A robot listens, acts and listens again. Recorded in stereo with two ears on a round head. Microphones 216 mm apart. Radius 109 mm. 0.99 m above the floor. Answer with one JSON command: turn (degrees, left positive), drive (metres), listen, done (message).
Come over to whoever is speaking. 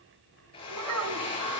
{"turn": -90}
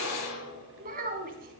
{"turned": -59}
{"turn": -35}
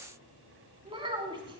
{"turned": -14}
{"turn": -20}
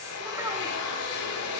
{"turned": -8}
{"turn": -10}
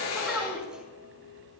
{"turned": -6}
{"listen": true}
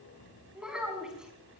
{"drive": 1.0}
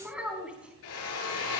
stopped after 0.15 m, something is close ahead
{"done": "Something is in my way. I am facing the child speaking but have not reached it."}